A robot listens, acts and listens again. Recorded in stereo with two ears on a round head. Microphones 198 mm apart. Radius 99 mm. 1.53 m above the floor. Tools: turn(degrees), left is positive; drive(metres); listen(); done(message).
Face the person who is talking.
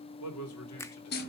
turn(degrees=70)
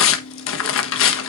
listen()
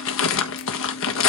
listen()
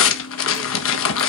done("I heard a man speaking, but can't make it out now. It was about straight ahead or 40° left.")